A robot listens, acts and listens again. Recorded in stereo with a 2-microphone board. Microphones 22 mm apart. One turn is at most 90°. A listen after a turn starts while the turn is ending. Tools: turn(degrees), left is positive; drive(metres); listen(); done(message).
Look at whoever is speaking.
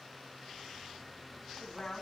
turn(degrees=45)
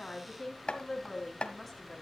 done("Facing the woman speaking.")